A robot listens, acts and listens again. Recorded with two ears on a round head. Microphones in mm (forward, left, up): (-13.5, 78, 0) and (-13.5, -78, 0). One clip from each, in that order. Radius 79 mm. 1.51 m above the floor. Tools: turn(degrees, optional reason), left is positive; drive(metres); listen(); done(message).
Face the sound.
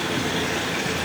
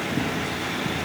listen()
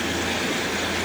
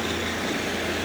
listen()
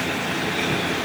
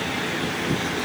done("I can't make out anything.")